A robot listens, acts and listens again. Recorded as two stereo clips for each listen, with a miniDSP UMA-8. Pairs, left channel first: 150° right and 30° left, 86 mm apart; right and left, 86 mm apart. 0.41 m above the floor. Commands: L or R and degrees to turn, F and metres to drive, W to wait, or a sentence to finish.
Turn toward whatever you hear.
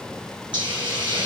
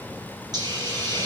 L50
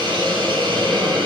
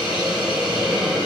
L10
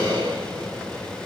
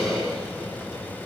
Facing the hiss, over 4 m away.